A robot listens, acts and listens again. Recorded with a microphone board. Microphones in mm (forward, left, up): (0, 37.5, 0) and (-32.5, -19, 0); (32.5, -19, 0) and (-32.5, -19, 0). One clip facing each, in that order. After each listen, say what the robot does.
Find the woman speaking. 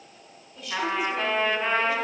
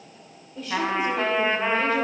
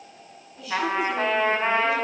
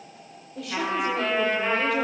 Turn 175° right.
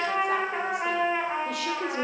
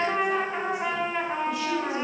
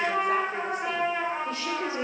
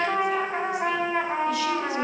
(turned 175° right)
Keep listening.
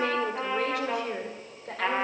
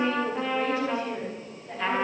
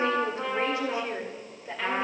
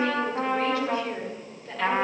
Turn 80° left.
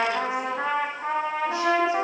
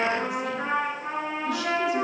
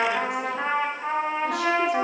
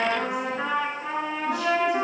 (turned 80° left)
Keep listening.
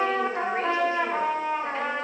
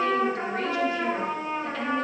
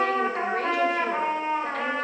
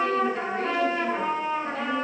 Keep listening.
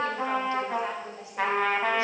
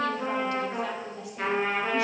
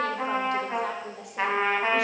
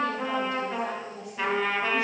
Found it: a woman speaking, straight ahead, 2 to 4 m away.